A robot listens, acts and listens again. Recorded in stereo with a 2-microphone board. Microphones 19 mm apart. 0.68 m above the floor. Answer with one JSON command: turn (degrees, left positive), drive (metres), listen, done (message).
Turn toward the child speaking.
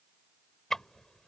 {"listen": true}
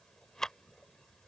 {"listen": true}
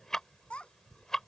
{"turn": 90}
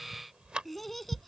{"turn": 10}
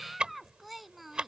{"done": "Found it: a child speaking, straight ahead."}